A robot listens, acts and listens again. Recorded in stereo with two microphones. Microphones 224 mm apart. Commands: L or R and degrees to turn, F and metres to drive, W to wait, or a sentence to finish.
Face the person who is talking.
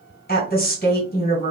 L45
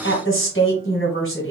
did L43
L85
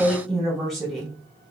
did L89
Found it: a woman speaking, straight ahead.